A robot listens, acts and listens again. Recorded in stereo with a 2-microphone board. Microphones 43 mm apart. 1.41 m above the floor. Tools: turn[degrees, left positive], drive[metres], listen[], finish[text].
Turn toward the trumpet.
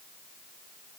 Action: listen[]
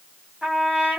Thought: The trumpet: about 20° right or 160° right.
Action: turn[-20]
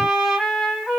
Action: finish[Facing the trumpet.]